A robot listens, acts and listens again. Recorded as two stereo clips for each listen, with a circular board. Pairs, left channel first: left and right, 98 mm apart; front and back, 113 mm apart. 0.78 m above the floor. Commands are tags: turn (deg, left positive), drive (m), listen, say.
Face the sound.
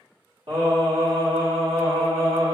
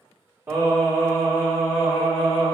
<turn deg="-95"/>
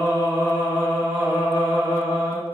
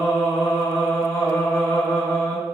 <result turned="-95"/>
<turn deg="75"/>
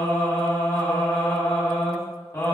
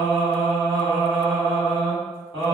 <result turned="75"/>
<turn deg="35"/>
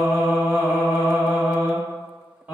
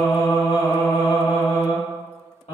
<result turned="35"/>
<turn deg="-15"/>
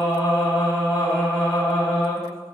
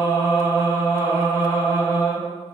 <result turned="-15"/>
<say>Found it: singing, straight ahead.</say>